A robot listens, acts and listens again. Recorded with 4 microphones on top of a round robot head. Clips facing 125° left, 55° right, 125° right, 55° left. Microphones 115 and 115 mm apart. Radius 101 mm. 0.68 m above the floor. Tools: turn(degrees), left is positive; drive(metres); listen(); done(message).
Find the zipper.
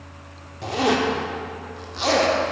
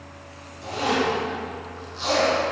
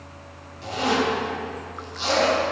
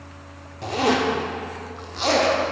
turn(degrees=95)
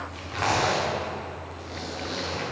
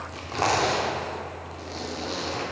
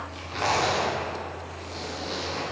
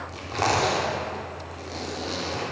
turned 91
done("Found it: a zipper, straight ahead.")